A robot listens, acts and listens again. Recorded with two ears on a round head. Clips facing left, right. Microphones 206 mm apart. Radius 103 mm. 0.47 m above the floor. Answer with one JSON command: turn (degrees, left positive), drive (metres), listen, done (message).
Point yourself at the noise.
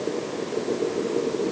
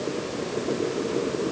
{"listen": true}
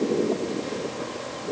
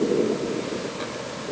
{"listen": true}
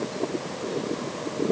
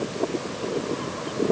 {"done": "I can't make out anything."}